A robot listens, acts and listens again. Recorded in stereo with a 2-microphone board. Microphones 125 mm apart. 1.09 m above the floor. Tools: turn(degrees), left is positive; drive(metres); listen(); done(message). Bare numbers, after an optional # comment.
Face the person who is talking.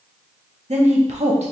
# The woman speaking: about 65° right or 115° right.
turn(-65)
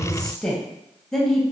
done("Found it: a woman speaking, straight ahead.")